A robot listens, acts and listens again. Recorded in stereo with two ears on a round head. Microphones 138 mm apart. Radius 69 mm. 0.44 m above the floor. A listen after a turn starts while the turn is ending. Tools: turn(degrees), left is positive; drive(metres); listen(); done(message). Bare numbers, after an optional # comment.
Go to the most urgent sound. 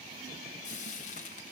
listen()
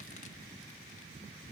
listen()
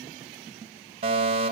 # The fire alarm: about 40° right or 140° right.
turn(-40)
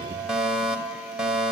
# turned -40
drive(1.0)
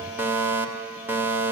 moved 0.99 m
# The fire alarm is now 20° right.
turn(-20)
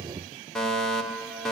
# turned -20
drive(1.0)
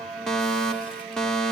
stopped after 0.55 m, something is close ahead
done("Arrived at the fire alarm, straight ahead.")